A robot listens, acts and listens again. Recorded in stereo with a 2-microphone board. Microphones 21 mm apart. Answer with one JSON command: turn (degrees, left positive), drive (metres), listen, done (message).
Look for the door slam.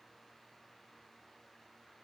{"listen": true}
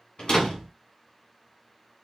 {"turn": 50}
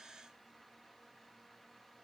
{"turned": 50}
{"listen": true}
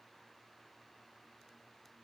{"done": "I heard a door slam, but can't make it out now. It was about straight ahead or 80° left."}